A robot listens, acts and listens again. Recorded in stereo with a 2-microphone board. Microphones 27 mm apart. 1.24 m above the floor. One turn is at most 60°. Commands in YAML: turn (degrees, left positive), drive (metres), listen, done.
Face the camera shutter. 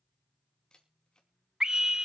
turn: 35
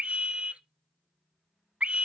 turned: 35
listen: true
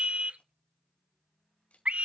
turn: 60
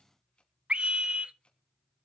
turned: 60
turn: 55
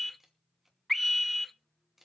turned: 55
turn: -10
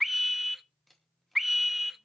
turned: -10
done: "Found it: a camera shutter, straight ahead."